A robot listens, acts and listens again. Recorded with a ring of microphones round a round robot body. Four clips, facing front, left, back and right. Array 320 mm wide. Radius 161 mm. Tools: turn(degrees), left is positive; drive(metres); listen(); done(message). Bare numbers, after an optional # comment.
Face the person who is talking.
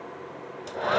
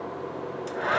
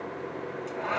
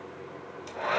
listen()
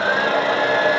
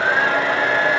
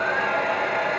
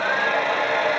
listen()
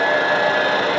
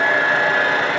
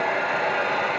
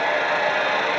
done("I can't make out anyone speaking to turn to.")